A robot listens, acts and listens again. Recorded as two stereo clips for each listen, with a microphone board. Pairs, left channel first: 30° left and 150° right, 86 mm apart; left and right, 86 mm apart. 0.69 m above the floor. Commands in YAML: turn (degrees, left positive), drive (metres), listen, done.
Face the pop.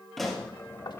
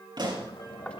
turn: -60
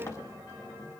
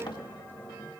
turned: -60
done: "Facing where the pop came from. I can't hear it now."